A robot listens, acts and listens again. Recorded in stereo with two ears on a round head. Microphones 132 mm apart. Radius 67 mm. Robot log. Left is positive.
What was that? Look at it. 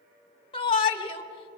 note: The shout: about 40° left or 140° left.
cmd yaw +40
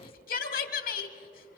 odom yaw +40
note: So it is at 105° left.
cmd yaw +105
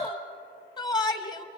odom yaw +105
note: The shout is now 30° left.
cmd yaw +30
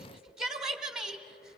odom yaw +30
end: Found it: a shout, straight ahead.